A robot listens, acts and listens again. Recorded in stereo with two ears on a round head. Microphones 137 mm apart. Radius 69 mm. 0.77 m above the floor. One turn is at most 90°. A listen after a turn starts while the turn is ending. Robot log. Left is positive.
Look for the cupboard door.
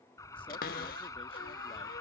note: The cupboard door: about 65° left or 115° left.
cmd yaw +65
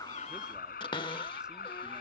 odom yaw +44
note: So it is at 35° left.
cmd yaw +35
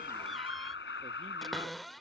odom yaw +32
end: Facing the cupboard door.